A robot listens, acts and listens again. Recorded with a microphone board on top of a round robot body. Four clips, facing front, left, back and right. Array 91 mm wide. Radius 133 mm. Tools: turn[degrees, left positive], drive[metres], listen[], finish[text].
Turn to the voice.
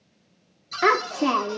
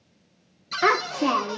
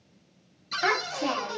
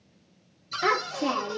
Thought: The child speaking: 40° left.
Action: turn[40]
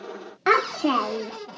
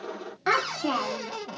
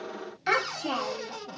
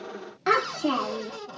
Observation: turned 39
Action: finish[Found it: a child speaking, straight ahead, under 1 m away.]